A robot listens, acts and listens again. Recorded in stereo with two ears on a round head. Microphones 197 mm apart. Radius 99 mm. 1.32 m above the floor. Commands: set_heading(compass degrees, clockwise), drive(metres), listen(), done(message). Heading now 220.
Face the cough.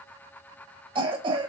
set_heading(245)
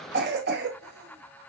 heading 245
set_heading(15)
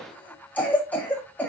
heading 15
done("Found it: a cough, straight ahead, 1 to 2 m away.")